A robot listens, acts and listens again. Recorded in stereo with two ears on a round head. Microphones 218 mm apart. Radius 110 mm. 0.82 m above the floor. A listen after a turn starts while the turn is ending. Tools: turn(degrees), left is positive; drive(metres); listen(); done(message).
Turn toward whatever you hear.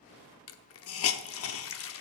turn(degrees=60)
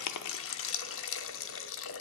turn(degrees=55)
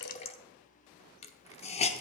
turn(degrees=25)
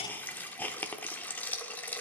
turn(degrees=10)
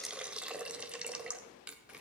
done("Found it: a hiss, straight ahead.")